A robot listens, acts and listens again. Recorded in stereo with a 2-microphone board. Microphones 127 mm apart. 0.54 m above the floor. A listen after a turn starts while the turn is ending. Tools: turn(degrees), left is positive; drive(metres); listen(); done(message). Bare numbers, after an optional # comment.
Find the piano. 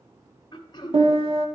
# The piano: about 50° right or 130° right.
turn(-50)
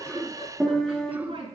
done("Facing the piano.")